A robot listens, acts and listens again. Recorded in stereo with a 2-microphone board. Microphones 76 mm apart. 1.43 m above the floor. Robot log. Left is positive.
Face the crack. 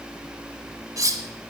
cmd idle
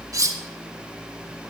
cmd idle
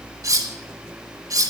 end: I can't make out a crack, only cutlery clinking.